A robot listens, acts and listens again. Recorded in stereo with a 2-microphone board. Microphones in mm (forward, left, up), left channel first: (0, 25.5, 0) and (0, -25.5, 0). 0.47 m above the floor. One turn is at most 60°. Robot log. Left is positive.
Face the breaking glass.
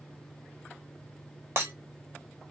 note: The breaking glass: about 50° right or 130° right.
cmd yaw -50
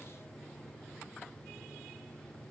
cmd idle
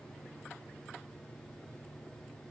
end: I heard breaking glass, but can't make it out now. It was about straight ahead or 80° right.